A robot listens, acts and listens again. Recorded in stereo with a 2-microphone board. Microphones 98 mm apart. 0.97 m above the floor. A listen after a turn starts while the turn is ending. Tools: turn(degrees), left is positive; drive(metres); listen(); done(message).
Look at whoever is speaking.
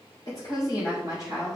turn(degrees=40)
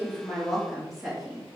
done("Facing the woman speaking.")